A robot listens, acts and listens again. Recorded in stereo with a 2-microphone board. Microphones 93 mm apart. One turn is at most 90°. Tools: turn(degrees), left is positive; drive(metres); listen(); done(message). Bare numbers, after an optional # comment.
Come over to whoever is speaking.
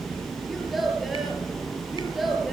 turn(30)
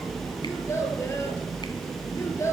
# So it is at 150° left.
turn(90)
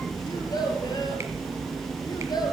# The child speaking is now 50° left.
turn(50)
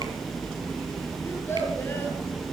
# The child speaking is now 25° left.
turn(25)
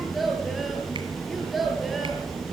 drive(1.0)
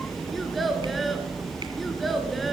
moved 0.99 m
drive(1.0)
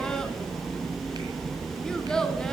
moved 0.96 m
drive(1.0)
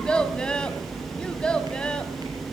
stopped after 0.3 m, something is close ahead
# The child speaking is now 10° left.
turn(10)
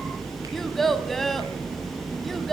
done("I am next to the child speaking.")